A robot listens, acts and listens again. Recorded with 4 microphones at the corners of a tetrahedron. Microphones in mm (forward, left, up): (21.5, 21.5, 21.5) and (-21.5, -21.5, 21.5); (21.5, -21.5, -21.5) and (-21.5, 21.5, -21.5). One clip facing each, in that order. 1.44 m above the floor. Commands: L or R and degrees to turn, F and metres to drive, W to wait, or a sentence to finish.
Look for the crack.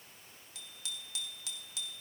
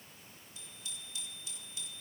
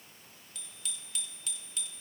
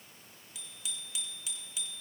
W
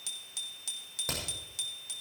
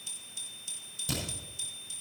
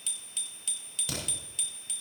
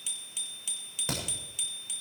L80
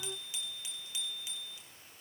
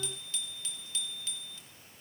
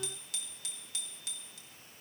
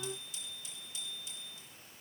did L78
Facing where the crack came from. I can't hear it now.